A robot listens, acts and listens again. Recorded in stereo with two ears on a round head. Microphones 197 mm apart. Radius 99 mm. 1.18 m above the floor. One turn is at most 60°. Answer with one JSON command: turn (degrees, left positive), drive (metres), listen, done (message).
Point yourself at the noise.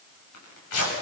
{"turn": 60}
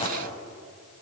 {"turn": 25}
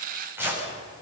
{"turn": -10}
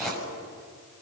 {"done": "Facing the tearing paper."}